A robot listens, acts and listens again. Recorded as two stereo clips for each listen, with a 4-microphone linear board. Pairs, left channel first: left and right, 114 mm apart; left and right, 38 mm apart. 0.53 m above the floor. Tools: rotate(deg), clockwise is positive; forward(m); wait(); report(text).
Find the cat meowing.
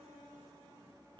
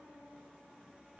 wait()
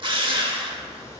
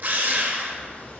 rotate(-30)
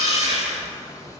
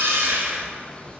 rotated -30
rotate(-30)
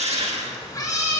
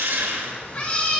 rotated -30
rotate(-25)
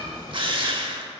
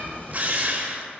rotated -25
rotate(-40)
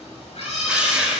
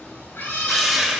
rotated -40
rotate(-115)
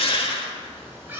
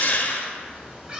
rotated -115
rotate(20)
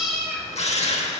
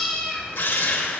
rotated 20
report("Found it: a cat meowing, straight ahead.")